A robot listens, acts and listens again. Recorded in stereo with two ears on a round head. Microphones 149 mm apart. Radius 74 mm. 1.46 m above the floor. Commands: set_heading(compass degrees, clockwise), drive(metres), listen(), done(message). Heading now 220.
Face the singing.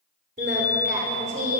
set_heading(275)
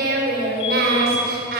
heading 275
set_heading(335)
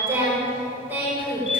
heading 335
set_heading(345)
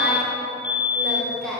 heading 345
done("Found it: singing, straight ahead, over 4 m away.")